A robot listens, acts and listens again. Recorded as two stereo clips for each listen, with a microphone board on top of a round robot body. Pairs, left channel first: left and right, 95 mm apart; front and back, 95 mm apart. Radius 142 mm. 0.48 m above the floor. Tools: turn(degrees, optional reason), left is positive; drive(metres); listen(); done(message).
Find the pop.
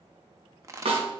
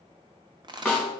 turn(degrees=-145, reason="The pop: 145° right.")
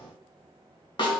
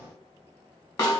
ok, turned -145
done("Facing where the pop came from. I can't hear it now.")